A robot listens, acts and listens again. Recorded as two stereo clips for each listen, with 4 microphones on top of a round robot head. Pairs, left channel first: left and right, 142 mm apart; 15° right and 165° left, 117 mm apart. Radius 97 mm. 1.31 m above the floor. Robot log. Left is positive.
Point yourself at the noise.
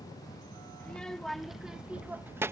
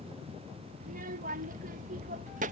note: The child speaking: 160° right.
cmd yaw -160
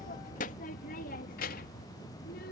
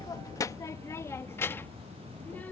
note: The child speaking is now 60° left.
cmd yaw +60
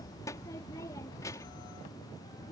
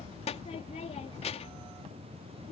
note: The child speaking is now 15° left.
cmd yaw +15
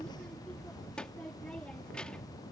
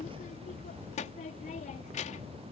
end: Facing the child speaking.